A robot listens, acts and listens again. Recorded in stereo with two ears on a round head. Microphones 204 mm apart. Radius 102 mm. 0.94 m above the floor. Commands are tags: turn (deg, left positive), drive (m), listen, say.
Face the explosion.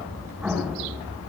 <turn deg="-30"/>
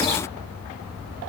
<listen/>
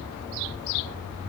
<say>I heard an explosion, but can't make it out now. It was about 25° left or 145° right.</say>